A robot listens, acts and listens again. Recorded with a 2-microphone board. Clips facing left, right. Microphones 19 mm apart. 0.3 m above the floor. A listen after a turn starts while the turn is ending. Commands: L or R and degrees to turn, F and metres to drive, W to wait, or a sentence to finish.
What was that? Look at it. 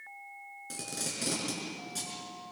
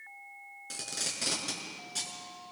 R25
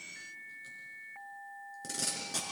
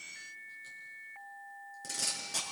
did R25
Facing the tape being pulled, over 4 m away.